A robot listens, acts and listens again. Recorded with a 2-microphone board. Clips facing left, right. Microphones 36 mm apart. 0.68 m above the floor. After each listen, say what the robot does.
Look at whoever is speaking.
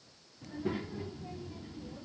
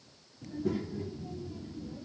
Turn 30° left.
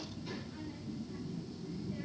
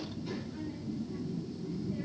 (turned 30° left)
Found it: a child speaking, straight ahead, under 1 m away.